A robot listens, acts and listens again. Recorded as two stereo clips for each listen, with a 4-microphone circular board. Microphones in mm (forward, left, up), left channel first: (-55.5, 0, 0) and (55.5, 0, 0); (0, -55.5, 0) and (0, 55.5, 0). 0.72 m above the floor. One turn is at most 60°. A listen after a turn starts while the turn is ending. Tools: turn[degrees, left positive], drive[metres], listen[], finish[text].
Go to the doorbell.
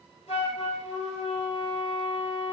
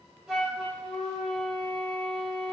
Action: listen[]
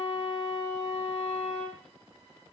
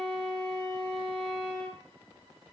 Action: listen[]
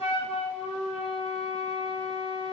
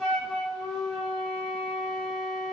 Action: finish[I can't make out a doorbell, only a flute.]